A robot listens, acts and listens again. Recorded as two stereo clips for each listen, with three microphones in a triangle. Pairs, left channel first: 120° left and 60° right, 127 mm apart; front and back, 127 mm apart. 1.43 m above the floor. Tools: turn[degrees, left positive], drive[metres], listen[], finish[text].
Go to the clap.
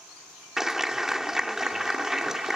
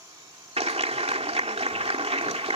Thought: The clap: 145° right.
Action: turn[-145]
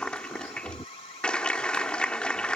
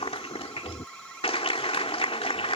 Thought: The clap is now 40° left.
Action: turn[40]
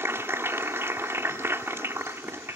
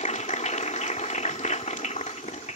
Thought: The clap is now 10° left.
Action: turn[10]
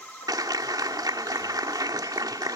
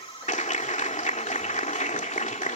Action: drive[1.0]
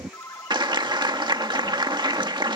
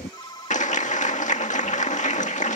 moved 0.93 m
Thought: The clap is now 10° right.
Action: turn[-10]
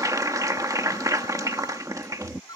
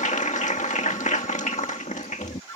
Action: drive[1.0]
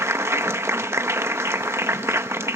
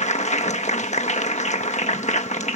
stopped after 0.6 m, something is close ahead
Thought: The clap is now 10° left.
Action: turn[10]
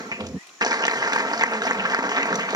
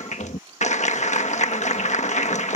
Action: finish[I am next to the clap.]